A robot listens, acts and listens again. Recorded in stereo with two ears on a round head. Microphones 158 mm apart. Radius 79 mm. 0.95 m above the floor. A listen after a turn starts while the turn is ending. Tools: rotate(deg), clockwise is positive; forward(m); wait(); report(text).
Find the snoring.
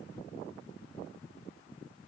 wait()
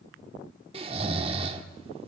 rotate(35)
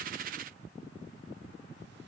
wait()
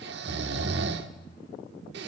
rotate(115)
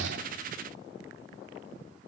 wait()
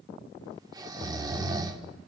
rotate(20)
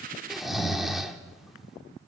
report("Found it: snoring, straight ahead.")